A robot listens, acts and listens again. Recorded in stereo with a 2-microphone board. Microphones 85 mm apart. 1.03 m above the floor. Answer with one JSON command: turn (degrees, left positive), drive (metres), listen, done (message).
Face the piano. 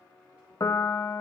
{"turn": 40}
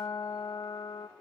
{"turn": 100}
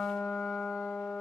{"done": "Found it: a piano, straight ahead, under 1 m away."}